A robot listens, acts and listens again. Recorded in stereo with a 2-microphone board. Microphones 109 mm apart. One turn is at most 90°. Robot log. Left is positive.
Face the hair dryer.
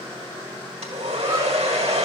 cmd yaw -90
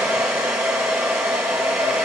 note: So it is at 10° right.
cmd yaw -10
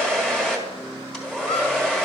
end: Found it: a hair dryer, straight ahead, 1 to 2 m away.